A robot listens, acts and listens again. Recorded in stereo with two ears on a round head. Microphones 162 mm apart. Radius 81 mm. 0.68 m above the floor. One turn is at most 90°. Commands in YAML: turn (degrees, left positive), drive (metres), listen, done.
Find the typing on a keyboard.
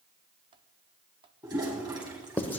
listen: true
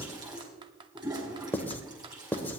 turn: -25
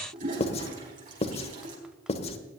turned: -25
listen: true
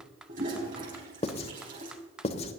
done: "Facing the typing on a keyboard, under 1 m away."